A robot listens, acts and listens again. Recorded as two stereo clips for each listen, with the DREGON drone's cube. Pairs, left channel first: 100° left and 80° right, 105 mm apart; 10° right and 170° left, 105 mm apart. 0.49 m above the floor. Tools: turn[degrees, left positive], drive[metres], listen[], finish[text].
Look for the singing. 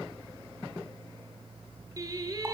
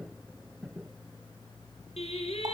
Thought: The singing: 25° right.
Action: turn[-25]
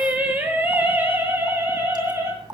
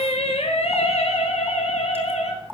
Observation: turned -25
Thought: The singing is now 10° right.
Action: turn[-10]
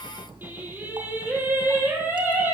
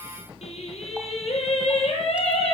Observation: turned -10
Thought: The singing is now 10° right.
Action: turn[-10]
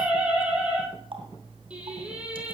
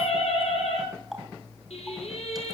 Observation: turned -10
Action: finish[Found it: singing, straight ahead, over 4 m away.]